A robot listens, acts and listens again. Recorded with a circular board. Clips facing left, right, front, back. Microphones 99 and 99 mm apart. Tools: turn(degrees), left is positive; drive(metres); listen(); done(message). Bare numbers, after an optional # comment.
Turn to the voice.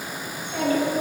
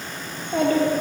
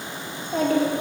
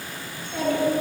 # The child speaking: 50° right.
turn(-50)
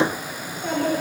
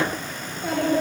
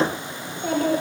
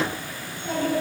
done("Found it: a child speaking, straight ahead, 2 to 4 m away.")